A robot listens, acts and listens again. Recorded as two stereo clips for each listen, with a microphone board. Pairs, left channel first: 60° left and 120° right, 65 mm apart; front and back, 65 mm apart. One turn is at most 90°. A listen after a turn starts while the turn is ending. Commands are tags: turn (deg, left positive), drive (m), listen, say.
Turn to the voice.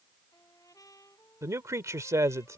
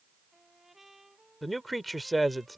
<turn deg="-90"/>
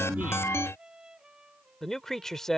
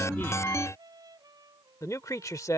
<turn deg="-20"/>
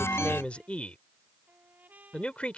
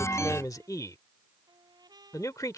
<turn deg="-10"/>
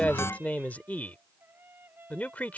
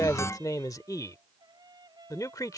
<say>Facing the man speaking.</say>